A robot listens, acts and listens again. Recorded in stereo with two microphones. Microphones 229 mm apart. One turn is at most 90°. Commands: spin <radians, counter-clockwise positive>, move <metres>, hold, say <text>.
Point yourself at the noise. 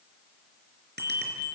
spin -0.79
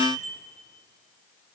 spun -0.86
spin -1.48
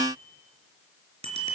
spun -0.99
spin -0.44
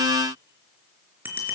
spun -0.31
spin -0.17
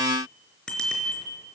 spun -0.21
say Found it: a bicycle bell, straight ahead, 2 to 4 m away.